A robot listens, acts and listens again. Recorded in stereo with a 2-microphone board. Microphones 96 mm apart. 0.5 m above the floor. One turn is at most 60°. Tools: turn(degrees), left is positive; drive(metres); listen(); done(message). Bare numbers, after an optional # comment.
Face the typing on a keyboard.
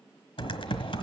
# The typing on a keyboard: about 65° left or 115° left.
turn(60)
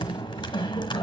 # So it is at 55° left.
turn(55)
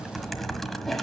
done("Found it: typing on a keyboard, straight ahead.")